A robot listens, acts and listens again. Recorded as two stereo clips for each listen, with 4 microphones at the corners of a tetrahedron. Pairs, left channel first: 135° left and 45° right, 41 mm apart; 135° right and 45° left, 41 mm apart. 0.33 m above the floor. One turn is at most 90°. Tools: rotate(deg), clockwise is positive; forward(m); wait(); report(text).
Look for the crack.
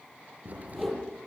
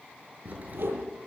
report("Found it: a crack, straight ahead, over 4 m away.")